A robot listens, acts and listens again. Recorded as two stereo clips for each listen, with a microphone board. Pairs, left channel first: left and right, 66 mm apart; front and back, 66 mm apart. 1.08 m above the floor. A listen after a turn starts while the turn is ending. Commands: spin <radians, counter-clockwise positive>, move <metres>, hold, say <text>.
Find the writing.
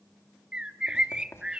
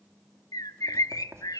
spin 2.36
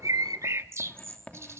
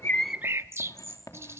spin 0.26
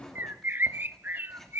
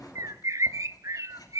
say Found it: writing, straight ahead.